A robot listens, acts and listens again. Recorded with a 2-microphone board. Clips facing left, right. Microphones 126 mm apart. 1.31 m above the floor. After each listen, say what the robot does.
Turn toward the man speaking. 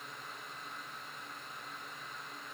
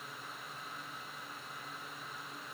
Keep listening.
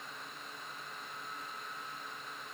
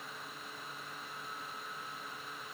Keep listening.
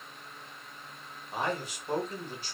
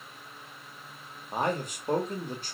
Turn 50° right.
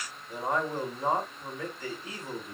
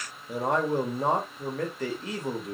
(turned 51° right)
Turn 80° right.
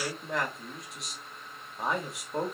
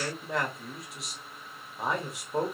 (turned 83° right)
Found it: a man speaking, straight ahead, 1 to 2 m away.